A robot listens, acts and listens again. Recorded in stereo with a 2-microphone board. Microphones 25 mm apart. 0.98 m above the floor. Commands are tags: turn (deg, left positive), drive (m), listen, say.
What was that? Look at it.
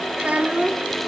<turn deg="-70"/>
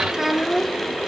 <turn deg="-20"/>
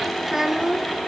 <turn deg="-20"/>
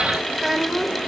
<turn deg="-15"/>
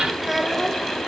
<say>Found it: a child speaking, straight ahead.</say>